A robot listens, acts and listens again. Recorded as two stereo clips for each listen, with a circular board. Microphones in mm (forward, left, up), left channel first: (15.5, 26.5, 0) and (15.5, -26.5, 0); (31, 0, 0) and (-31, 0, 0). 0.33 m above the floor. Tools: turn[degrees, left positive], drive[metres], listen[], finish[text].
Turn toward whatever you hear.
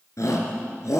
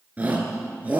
Thought: The shout: 115° left.
Action: turn[115]
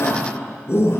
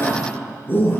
Thought: The shout is now 55° left.
Action: turn[55]
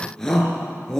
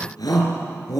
Thought: The shout is now 10° left.
Action: turn[10]
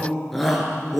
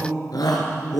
Action: finish[Found it: a shout, straight ahead.]